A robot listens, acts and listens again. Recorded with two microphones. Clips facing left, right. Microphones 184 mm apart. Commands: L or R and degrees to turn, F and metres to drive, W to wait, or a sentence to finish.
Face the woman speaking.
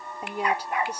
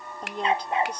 L30
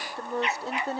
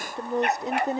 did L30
R20
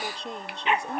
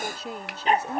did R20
Found it: a woman speaking, straight ahead.